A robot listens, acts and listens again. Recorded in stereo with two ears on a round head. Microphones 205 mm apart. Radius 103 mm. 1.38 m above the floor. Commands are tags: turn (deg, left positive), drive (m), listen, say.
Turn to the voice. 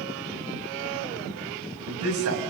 <turn deg="-75"/>
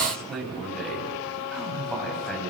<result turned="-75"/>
<say>Facing the man speaking.</say>